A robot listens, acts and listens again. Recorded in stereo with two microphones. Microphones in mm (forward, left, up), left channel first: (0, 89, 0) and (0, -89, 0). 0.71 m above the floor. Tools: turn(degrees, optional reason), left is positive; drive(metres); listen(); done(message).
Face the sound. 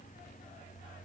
listen()
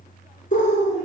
turn(degrees=45, reason="The bird: about 45° left or 135° left.")
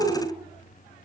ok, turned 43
done("Facing the bird, 1 to 2 m away.")